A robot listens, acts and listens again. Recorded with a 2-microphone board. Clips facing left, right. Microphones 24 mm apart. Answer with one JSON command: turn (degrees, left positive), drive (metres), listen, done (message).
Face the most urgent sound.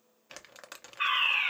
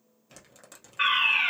{"turn": -65}
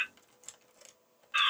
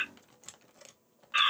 {"turn": -20}
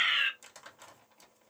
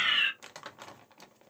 {"done": "Facing the fire alarm."}